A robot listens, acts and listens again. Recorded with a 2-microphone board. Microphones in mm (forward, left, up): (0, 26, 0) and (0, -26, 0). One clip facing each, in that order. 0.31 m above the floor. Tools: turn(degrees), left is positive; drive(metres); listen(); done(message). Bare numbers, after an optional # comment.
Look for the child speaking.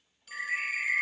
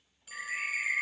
listen()
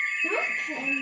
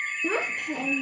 # The child speaking: about 70° right or 110° right.
turn(-70)
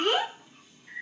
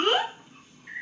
# So it is at 35° right.
turn(-35)
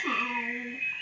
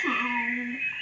# The child speaking is now 15° right.
turn(-15)
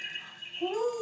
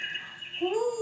# The child speaking is now 15° right.
turn(-15)
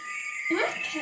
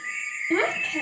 # The child speaking is now 15° right.
turn(-15)
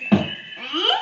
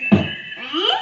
done("Found it: a child speaking, straight ahead.")